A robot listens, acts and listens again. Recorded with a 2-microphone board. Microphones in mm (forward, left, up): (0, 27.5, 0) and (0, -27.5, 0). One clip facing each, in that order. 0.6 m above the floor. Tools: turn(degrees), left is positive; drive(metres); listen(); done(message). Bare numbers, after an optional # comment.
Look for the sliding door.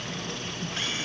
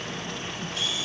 listen()
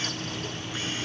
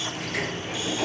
turn(-90)
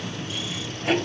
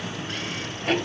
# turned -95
done("Facing the sliding door.")